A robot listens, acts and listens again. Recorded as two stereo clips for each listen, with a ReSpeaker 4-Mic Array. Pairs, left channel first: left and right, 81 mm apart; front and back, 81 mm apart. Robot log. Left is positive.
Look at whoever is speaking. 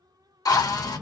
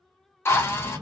note: The child speaking: 160° right.
cmd yaw -160
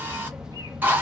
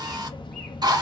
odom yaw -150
note: The child speaking is now 10° right.
cmd yaw -10
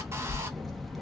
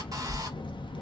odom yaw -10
end: Found it: a child speaking, straight ahead, under 1 m away.